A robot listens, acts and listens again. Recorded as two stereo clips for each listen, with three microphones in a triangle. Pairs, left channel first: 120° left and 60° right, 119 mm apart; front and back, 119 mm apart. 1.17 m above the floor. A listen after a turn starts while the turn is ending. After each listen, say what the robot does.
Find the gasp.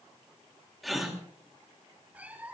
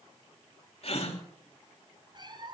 Turn 30° left.
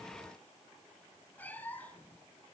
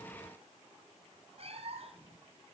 I heard a gasp from this way, but can't make it out now.